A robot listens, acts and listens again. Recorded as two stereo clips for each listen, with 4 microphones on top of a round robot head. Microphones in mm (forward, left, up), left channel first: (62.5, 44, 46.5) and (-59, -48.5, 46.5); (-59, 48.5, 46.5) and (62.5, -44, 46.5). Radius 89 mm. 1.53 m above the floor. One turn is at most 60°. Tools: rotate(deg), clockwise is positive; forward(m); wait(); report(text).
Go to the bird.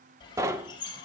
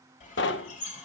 rotate(-60)
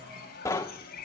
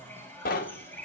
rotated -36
rotate(-60)
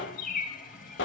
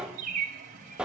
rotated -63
forward(1.0)
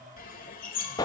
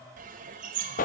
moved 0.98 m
forward(1.0)
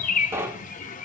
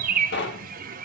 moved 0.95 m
forward(1.0)
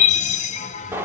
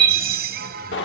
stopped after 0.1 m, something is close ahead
rotate(10)
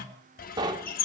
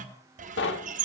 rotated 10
report("I am next to the bird.")